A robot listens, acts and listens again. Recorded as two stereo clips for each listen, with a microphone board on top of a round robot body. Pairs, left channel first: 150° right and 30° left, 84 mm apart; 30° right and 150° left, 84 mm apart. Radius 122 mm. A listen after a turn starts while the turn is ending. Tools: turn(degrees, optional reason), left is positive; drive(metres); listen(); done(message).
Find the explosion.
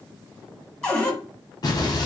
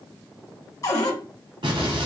turn(degrees=170, reason="The explosion: 170° left.")
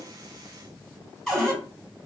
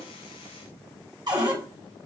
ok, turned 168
done("I heard an explosion from this way, but can't make it out now.")